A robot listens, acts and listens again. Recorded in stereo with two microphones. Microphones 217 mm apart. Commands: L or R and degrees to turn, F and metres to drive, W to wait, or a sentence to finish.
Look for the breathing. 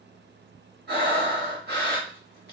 R50
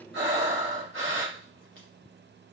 R80
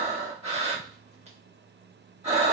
R30
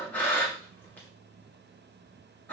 L10
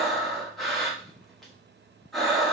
Found it: breathing, straight ahead.